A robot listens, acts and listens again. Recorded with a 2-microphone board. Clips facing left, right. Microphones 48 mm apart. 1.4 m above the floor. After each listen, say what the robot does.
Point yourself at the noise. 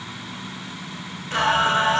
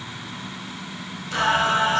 Turn 40° left.
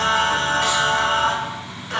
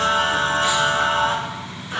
Turn 95° left.
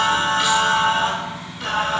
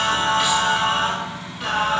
Turn 10° right.
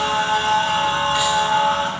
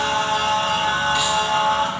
Facing the singing, 2 to 4 m away.